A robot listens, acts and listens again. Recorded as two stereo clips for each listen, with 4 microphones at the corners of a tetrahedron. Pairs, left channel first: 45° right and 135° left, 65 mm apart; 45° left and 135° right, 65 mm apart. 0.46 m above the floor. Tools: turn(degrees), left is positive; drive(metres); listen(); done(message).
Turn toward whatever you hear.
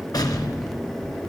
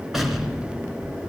turn(degrees=-50)
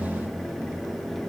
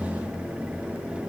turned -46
done("Facing where the explosion came from. I can't hear it now.")